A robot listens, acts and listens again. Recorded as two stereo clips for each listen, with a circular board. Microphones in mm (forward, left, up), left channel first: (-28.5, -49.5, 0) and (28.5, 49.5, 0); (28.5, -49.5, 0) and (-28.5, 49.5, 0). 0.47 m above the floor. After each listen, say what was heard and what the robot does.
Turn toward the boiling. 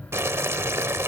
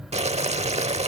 The boiling: 125° left. Turn 125° left.
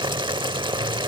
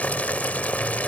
The boiling is now 15° left. Turn 15° left.
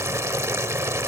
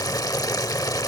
Found it: boiling, straight ahead.